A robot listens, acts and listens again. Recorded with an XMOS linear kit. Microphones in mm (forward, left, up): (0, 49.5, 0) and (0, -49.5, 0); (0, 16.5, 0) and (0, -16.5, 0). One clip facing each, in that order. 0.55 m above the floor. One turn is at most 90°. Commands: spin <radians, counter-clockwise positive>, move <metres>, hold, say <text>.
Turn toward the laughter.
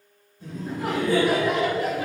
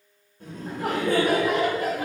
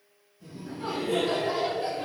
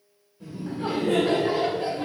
spin -0.70
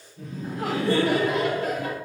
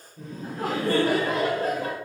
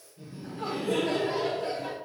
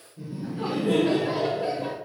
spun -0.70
spin -0.61
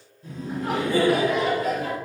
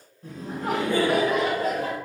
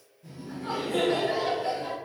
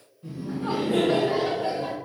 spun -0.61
spin -0.79
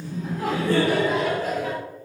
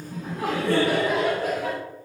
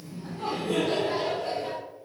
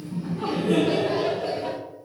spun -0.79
spin -1.05
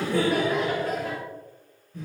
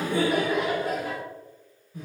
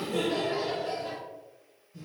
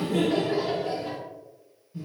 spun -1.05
spin -0.17
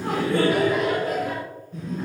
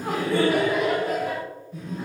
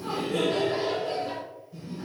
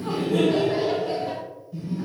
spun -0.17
say Facing the laughter, 1 to 2 m away.